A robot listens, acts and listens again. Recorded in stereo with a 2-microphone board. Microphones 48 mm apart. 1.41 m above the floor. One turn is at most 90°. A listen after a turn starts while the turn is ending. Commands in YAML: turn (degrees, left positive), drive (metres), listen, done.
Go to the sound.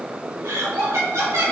turn: -75
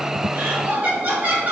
turn: -30
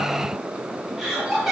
turn: -10
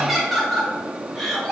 drive: 1.0
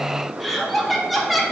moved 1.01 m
drive: 1.0
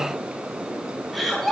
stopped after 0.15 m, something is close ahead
done: "I am next to the laughter."